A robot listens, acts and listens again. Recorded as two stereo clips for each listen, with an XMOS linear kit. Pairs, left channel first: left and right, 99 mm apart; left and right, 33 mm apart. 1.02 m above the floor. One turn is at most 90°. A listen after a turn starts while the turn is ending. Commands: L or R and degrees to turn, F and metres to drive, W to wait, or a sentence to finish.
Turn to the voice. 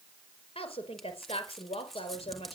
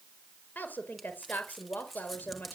L90
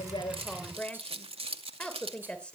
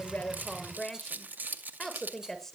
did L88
L10
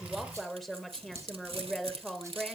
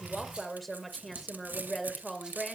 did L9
Found it: a woman speaking, straight ahead, over 4 m away.